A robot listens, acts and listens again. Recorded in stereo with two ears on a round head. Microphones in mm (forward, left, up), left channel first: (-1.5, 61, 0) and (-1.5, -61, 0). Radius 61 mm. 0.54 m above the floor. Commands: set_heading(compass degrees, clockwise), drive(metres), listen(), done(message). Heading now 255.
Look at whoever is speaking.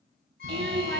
set_heading(345)
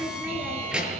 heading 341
done("Found it: a child speaking, straight ahead, over 4 m away.")